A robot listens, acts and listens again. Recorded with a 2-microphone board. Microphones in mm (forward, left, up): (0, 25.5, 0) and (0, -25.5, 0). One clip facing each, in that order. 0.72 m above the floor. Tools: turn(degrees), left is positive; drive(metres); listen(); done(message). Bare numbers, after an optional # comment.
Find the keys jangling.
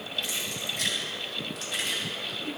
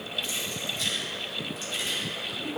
turn(90)
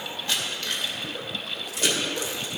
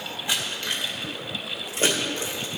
# So it is at 35° right.
turn(-35)
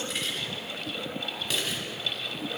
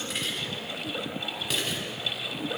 done("Facing the keys jangling.")